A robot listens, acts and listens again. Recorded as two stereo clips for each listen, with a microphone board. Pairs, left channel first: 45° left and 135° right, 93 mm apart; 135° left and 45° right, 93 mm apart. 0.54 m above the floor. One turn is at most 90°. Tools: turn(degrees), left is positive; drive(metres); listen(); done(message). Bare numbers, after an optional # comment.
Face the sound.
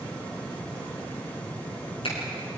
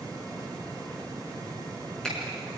# The finger snap: 50° left.
turn(50)
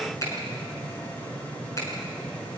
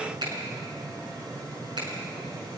# The finger snap is now 10° right.
turn(-10)
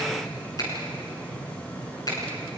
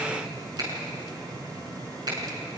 done("Facing the finger snap, over 4 m away.")